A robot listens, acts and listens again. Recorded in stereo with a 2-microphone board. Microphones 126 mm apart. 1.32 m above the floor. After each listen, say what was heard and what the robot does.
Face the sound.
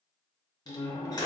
The door slam: about 30° left or 150° left. Turn 30° left.
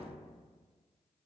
Keep listening.
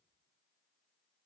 I heard a door slam, but can't make it out now. It was about straight ahead or 120° left.